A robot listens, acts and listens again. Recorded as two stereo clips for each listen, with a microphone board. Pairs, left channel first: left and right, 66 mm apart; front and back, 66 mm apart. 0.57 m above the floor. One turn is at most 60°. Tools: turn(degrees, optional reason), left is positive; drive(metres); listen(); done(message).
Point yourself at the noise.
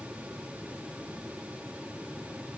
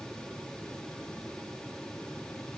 listen()
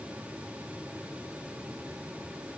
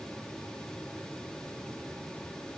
listen()
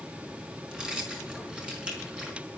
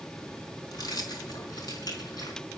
turn(degrees=-15, reason="The keys jangling: 15° right.")
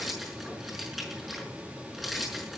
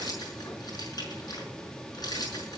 done("Found it: keys jangling, straight ahead, over 4 m away.")